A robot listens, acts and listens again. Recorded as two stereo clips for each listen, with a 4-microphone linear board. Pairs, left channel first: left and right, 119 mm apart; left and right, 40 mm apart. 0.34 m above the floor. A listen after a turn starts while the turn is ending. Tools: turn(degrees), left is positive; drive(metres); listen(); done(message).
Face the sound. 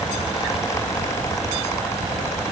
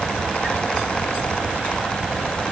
listen()
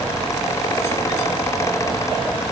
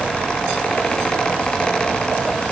listen()
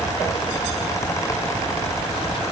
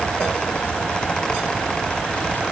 done("I can't make out anything to turn to.")